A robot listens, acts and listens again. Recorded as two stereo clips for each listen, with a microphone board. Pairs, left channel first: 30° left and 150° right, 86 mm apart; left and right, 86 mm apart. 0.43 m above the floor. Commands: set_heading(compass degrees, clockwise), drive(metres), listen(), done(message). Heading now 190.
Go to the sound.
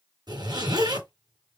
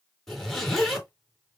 set_heading(15)
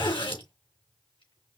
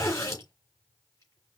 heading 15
set_heading(340)
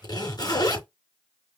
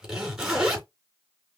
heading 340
drive(1.0)
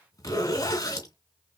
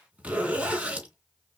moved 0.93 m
set_heading(355)
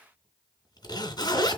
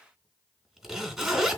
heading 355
drive(1.0)
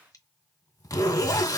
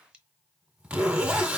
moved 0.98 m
set_heading(10)
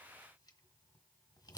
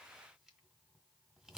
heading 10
listen()
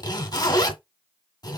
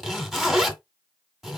drive(1.0)
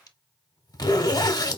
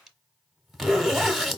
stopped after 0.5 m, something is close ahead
done("Arrived at the zipper, straight ahead.")